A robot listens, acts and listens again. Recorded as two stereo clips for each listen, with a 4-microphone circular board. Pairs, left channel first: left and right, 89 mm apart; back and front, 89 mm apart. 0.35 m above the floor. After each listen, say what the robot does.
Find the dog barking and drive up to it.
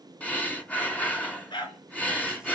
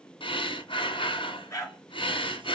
Turn 125° left.
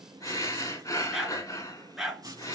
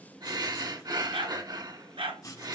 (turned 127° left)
Drive 1.0 m forward.
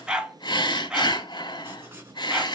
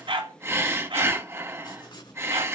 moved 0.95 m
Turn 10° right.
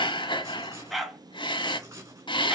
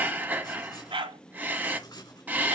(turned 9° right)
Drive 1.0 m forward.
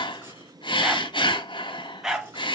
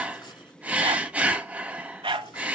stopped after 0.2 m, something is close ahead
I am next to the dog barking.